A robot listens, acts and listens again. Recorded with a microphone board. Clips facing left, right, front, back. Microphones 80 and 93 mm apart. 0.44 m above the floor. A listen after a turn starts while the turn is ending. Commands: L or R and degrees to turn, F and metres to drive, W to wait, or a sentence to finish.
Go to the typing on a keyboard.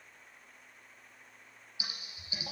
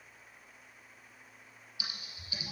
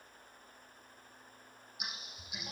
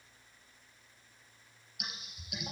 L150
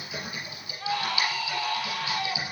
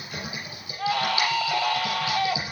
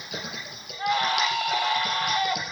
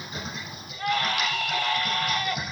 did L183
R30
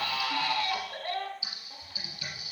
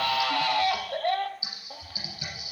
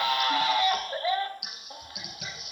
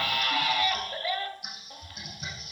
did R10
R20
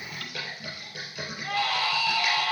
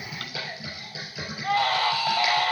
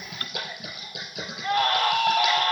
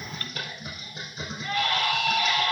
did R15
F1.0
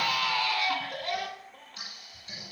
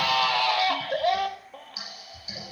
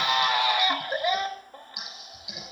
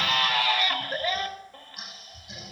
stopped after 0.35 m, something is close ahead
R10
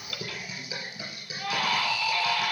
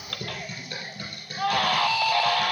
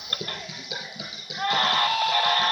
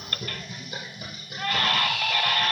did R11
Something is in my way. I am facing the typing on a keyboard but have not reached it.